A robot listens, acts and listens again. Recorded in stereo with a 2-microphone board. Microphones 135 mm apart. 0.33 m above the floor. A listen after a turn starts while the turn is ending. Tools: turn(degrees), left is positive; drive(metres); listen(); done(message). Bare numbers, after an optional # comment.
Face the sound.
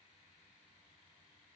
listen()
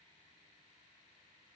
listen()
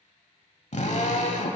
# The drill: about 60° left or 120° left.
turn(60)
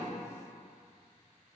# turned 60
listen()
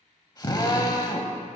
# So it is at 35° left.
turn(35)
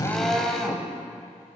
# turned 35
done("Facing the drill, 1 to 2 m away.")